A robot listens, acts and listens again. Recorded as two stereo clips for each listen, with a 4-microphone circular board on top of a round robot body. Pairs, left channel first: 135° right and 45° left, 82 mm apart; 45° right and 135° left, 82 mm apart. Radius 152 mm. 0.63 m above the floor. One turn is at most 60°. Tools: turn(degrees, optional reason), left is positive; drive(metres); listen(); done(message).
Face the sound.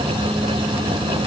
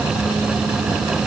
listen()
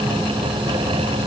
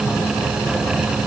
listen()
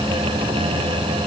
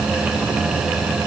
done("I can't make out anything.")